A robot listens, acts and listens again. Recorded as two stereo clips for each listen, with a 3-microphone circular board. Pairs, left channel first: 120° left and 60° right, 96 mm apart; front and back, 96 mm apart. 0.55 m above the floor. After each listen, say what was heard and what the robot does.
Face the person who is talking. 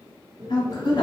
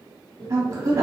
The woman speaking: 135° left. Turn 135° left.
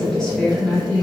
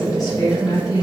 The woman speaking is now 40° left. Turn 40° left.
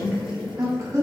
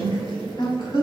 The woman speaking is now 10° right. Turn 10° right.
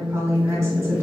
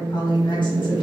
Found it: a woman speaking, straight ahead, 1 to 2 m away.